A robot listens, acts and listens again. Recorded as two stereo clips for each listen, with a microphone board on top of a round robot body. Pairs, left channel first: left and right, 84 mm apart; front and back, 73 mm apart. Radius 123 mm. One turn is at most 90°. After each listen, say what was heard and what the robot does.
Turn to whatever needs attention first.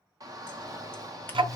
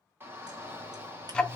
The shout: 125° right. Turn 90° right.
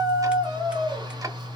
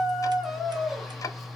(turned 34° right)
The shout is now 90° right. Turn 90° right.
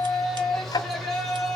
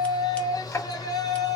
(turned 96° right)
Found it: a shout, straight ahead, 2 to 4 m away.